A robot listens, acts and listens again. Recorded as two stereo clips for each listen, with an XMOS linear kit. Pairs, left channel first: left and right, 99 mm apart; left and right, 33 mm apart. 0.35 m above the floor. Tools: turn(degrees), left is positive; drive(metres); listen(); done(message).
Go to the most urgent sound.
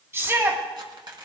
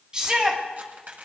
turn(degrees=-25)
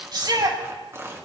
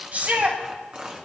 turn(degrees=-125)
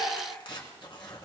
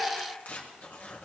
listen()
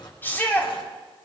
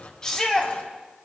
turn(degrees=20)
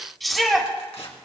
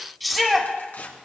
drive(metres=1.0)
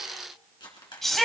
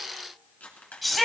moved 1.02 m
drive(metres=1.0)
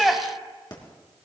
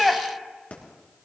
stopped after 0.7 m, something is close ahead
done("I am next to the shout.")